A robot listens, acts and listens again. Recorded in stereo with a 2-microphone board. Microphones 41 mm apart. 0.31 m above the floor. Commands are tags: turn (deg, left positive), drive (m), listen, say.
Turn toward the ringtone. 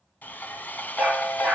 <turn deg="40"/>
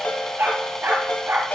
<turn deg="90"/>
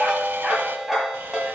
<say>Facing the ringtone, 1 to 2 m away.</say>